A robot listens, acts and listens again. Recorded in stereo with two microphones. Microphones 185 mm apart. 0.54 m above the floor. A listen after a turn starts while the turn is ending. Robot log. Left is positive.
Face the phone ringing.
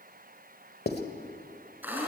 cmd idle
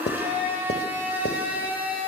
cmd idle
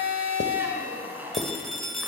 cmd yaw +30
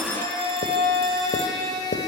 cmd idle
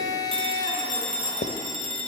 note: So it is at 30° right.
cmd yaw -30
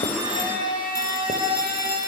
cmd idle
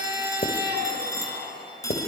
note: The phone ringing is now 20° left.
cmd yaw +20
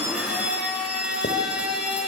cmd idle
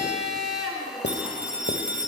end: Found it: a phone ringing, straight ahead, 2 to 4 m away.